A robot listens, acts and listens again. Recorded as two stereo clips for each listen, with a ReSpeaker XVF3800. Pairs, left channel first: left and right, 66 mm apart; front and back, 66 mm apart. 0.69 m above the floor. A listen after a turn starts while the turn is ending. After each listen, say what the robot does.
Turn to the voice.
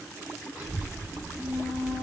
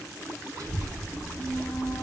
Turn 145° right.
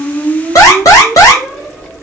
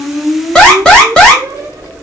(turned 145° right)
Turn 15° left.
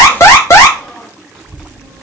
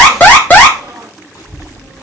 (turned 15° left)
Facing the child speaking, 1 to 2 m away.